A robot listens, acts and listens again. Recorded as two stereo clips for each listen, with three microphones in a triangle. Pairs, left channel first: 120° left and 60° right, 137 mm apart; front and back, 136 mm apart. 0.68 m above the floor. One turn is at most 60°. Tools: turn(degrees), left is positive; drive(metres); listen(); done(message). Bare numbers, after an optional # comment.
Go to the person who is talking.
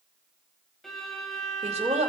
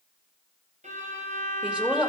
# The woman speaking: 100° right.
turn(-60)
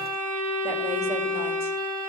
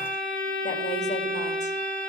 # Nothing new. It was at 40° right.
turn(-40)
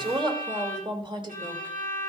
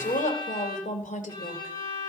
drive(1.0)
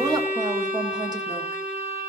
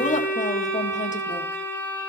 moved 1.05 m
listen()
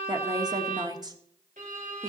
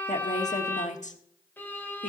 drive(1.0)
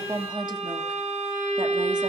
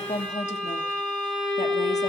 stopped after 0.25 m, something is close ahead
# The woman speaking is now 10° right.
turn(-10)
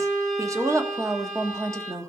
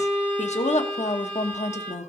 done("I am next to the woman speaking.")